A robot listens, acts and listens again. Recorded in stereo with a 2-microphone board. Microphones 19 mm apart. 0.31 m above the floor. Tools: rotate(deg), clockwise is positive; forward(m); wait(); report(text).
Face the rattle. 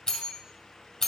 wait()
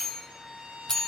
wait()
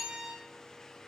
report("I can't make out a rattle, only a violin and a bell.")